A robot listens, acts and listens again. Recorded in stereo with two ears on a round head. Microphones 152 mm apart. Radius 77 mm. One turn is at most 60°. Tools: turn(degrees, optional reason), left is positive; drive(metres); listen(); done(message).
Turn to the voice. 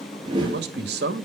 turn(degrees=-60, reason="The man speaking: about 65° right or 115° right.")
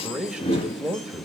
done("Found it: a man speaking, straight ahead, 1 to 2 m away.")